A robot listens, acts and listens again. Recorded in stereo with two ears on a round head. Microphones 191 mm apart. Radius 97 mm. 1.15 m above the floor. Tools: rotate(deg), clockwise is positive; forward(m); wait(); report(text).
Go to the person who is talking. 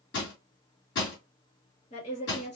rotate(-30)
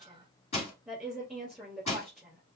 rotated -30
forward(1.0)
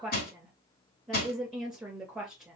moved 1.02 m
forward(1.0)
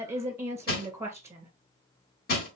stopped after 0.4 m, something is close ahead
rotate(15)
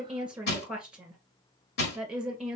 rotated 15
report("I am next to the woman speaking.")